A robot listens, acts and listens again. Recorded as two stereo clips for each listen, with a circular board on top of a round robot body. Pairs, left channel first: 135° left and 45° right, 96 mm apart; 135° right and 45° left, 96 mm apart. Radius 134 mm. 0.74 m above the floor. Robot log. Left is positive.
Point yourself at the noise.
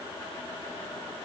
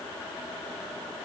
cmd idle
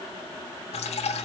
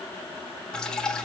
note: The dripping: 140° left.
cmd yaw +140
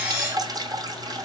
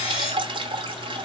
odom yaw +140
end: Facing the dripping, 1 to 2 m away.